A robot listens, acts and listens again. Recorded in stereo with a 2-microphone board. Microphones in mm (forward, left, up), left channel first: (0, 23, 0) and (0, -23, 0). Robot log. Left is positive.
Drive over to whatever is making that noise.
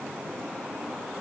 cmd idle
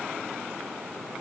cmd idle
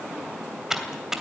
cmd yaw -30
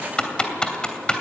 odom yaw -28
note: So it is at 20° left.
cmd yaw +20
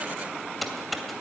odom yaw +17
cmd fwd 1.0
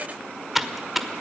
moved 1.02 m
cmd fwd 1.0
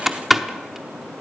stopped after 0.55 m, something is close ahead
end: Arrived at the typing on a keyboard, straight ahead.